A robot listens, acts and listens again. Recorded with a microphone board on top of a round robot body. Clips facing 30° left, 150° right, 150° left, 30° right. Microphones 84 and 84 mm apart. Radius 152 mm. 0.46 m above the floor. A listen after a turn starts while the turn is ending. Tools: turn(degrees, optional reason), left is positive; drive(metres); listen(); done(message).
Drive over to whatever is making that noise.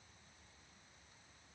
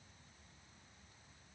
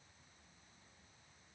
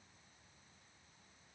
listen()
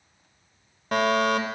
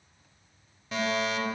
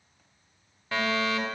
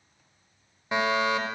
turn(degrees=35, reason="The fire alarm: 35° left.")
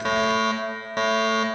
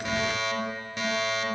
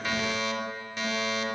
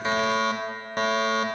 drive(metres=1.0)
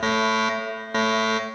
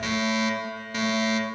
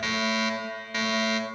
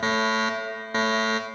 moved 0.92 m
turn(degrees=15, reason="The fire alarm is now 15° left.")
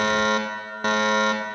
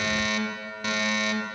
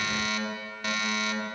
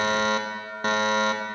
drive(metres=1.0)
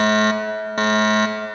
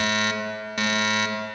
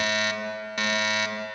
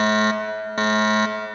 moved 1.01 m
drive(metres=1.0)
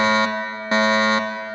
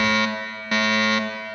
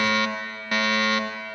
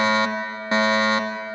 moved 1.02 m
drive(metres=1.0)
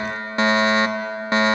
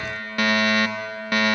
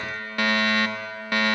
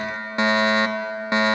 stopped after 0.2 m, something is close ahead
done("Arrived at the fire alarm, straight ahead.")